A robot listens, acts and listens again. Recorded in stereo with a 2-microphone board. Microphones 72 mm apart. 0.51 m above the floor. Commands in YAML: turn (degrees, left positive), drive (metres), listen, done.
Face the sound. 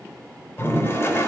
turn: 35
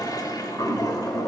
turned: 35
turn: 105
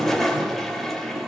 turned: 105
done: "Facing the toilet flushing, 2 to 4 m away."